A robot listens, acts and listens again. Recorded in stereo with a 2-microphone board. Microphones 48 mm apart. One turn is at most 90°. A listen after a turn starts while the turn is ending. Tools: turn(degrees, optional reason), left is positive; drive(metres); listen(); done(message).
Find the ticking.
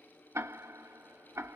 turn(degrees=-70, reason="The ticking: about 70° right or 110° right.")
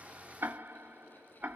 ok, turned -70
turn(degrees=-40, reason="So it is at 40° right.")
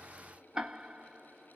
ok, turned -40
turn(degrees=-15, reason="The ticking is now 15° right.")
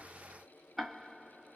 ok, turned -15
done("Found it: ticking, straight ahead, under 1 m away.")